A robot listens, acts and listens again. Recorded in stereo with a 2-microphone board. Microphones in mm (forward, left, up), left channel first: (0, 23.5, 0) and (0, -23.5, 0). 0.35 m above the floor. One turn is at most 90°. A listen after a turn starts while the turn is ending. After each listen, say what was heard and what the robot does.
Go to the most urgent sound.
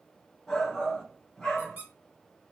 Turn 30° left.
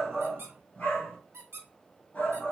So it is at 140° left. Turn 90° left.
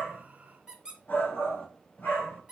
The shout is now 55° left. Turn 55° left.
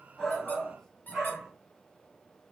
The shout is now 10° right. Turn 10° right.
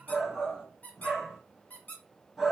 Drive 1.0 m forward.
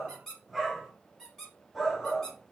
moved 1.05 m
Drive 1.0 m forward.
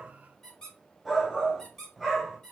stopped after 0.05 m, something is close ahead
Arrived at the shout, straight ahead.